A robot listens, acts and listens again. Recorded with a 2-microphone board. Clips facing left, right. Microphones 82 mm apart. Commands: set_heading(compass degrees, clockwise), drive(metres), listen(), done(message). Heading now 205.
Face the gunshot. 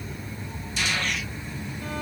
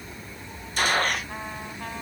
set_heading(250)
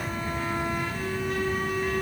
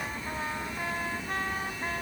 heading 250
listen()
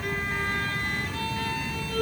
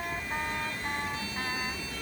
done("I heard a gunshot, but can't make it out now. It was about straight ahead or 90° right.")